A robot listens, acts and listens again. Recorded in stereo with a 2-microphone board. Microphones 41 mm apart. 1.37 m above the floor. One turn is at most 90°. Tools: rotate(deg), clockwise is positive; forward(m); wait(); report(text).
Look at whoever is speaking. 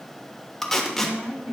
rotate(90)
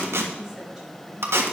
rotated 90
rotate(10)
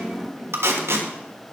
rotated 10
rotate(10)
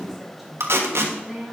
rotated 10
report("Found it: a woman speaking, straight ahead.")